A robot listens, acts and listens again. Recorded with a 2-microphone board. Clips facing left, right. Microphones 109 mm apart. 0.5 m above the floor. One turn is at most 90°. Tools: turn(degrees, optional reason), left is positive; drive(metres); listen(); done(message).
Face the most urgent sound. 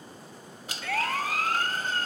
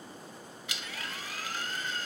turn(degrees=70, reason="The siren: about 70° left or 110° left.")
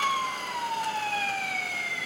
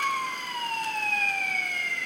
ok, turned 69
done("Facing the siren.")